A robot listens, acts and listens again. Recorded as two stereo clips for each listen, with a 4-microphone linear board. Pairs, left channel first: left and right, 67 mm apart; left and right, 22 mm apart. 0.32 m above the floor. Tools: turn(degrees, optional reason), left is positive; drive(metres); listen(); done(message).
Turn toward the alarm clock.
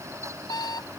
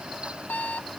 turn(degrees=90)
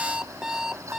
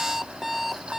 turn(degrees=-10, reason="So it is at 10° right.")
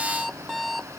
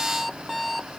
done("Found it: an alarm clock, straight ahead.")